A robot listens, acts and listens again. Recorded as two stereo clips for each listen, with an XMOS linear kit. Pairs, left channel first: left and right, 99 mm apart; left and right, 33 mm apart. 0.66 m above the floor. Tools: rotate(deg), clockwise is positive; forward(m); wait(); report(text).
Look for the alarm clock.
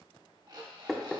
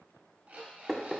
rotate(50)
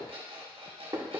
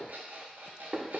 rotate(80)
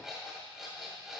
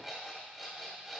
report("Found it: an alarm clock, straight ahead, 1 to 2 m away.")